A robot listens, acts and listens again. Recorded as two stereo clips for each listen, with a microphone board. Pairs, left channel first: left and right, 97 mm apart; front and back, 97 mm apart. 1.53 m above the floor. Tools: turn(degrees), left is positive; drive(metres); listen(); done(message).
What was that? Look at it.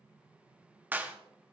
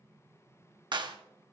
turn(degrees=-160)
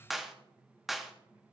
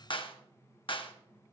done("Facing the clap.")